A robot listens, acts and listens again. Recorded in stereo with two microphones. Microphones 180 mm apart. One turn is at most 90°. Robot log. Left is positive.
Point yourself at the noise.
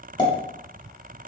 note: The pop: about 25° left or 155° left.
cmd yaw +25
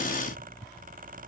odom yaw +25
cmd idle
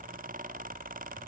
end: I heard a pop, but can't make it out now. It was about straight ahead or 130° left.